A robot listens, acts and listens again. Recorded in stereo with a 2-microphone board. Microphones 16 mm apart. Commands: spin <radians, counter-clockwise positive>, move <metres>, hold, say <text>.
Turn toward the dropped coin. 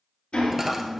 spin -0.35
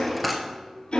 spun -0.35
say Found it: a dropped coin, straight ahead, 1 to 2 m away.